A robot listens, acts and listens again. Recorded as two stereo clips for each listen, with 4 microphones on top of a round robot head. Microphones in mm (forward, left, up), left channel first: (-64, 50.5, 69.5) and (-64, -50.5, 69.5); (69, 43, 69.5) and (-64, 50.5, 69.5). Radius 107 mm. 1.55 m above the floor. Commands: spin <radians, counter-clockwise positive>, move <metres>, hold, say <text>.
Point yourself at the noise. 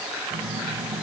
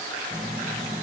spin -2.01
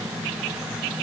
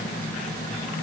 say Found it: a phone buzzing, straight ahead.